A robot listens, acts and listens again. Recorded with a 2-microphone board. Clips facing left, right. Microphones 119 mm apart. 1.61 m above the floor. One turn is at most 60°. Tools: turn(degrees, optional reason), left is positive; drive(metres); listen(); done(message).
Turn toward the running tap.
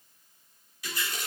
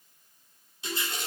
turn(degrees=-30, reason="The running tap: about 30° right or 150° right.")
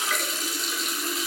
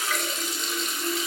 done("Facing the running tap, 2 to 4 m away.")